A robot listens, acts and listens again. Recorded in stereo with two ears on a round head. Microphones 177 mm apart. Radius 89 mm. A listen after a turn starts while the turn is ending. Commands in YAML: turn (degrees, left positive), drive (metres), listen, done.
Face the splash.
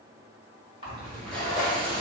turn: -30
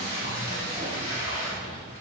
listen: true
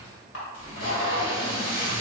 done: "I heard a splash, but can't make it out now. It was about straight ahead or 120° right."